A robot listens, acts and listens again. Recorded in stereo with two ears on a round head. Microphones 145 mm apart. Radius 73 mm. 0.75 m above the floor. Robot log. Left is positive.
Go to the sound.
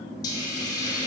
note: The hiss: about 25° left or 155° left.
cmd yaw +25
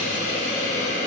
note: So it is at 130° left.
cmd yaw +130
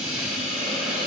cmd fwd 1.0
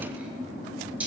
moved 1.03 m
note: The hiss is now 10° right.
cmd yaw -10
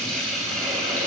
cmd fwd 1.0
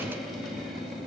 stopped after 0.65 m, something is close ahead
cmd idle
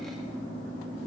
cmd idle
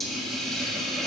end: I am next to the hiss.